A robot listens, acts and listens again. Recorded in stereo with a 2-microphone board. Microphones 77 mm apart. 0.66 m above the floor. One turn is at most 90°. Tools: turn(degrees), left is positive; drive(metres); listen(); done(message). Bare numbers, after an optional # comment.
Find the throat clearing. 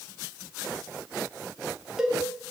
listen()
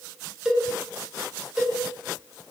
listen()
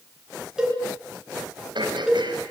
turn(-90)
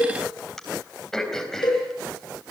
done("Found it: throat clearing, straight ahead, 2 to 4 m away.")